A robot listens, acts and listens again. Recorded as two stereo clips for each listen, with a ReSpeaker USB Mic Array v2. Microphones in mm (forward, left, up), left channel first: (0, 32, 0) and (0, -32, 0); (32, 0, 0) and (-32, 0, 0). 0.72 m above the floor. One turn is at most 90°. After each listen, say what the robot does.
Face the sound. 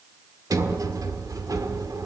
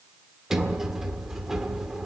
Turn 90° right.
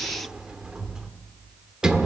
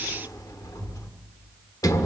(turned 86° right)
Turn 10° right.
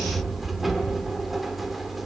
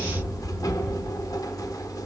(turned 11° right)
Found it: a sliding door, straight ahead, 1 to 2 m away.